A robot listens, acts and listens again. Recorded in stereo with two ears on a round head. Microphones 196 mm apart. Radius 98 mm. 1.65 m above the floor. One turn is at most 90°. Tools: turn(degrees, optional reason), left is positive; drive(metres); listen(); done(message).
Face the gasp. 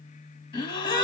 turn(degrees=20, reason="The gasp: about 20° left or 160° left.")
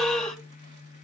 done("Found it: a gasp, straight ahead.")